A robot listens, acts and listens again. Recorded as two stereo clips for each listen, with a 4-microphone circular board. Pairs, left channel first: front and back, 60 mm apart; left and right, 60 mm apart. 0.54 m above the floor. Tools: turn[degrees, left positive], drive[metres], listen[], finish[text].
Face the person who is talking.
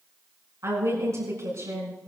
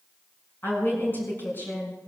Thought: The woman speaking: 145° left.
Action: turn[145]
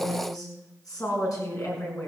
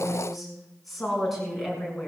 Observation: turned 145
Action: finish[Facing the woman speaking.]